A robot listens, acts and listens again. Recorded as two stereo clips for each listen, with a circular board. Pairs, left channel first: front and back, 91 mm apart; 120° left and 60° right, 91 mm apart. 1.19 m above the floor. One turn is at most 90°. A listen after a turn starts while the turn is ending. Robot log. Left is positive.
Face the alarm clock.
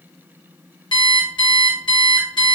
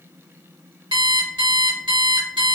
note: The alarm clock: 30° right.
cmd yaw -30
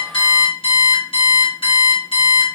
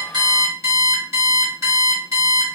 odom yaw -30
end: Facing the alarm clock, 1 to 2 m away.